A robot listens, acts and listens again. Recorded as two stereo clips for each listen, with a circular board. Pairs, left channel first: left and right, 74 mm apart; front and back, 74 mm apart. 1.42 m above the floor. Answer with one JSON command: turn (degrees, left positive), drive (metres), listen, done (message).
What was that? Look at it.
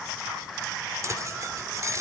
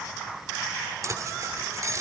{"turn": -135}
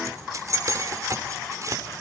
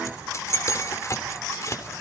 {"turn": -45}
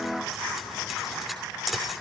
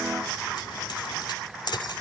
{"done": "Found it: keys jangling, straight ahead."}